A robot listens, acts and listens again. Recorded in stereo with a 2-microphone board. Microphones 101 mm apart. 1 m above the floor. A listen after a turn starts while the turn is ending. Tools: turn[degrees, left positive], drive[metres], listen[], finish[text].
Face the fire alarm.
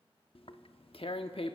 Action: listen[]
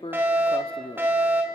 Thought: The fire alarm: about 25° right or 155° right.
Action: turn[-25]
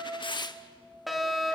Action: finish[Found it: a fire alarm, straight ahead.]